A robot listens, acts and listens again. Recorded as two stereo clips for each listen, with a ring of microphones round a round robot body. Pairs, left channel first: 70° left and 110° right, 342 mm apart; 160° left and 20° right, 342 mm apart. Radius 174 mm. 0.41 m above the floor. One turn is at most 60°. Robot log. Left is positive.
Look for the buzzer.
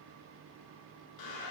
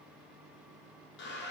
cmd idle
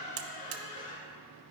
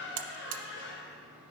note: The buzzer: 60° right.
cmd yaw -60
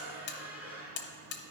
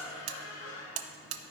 end: Found it: a buzzer, straight ahead, under 1 m away.